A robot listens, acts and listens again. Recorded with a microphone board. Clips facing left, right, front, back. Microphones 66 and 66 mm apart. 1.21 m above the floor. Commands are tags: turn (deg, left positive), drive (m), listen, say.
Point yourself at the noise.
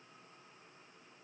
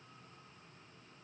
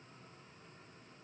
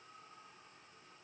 <listen/>
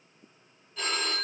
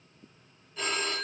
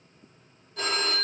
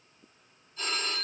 <say>Found it: a phone ringing, straight ahead.</say>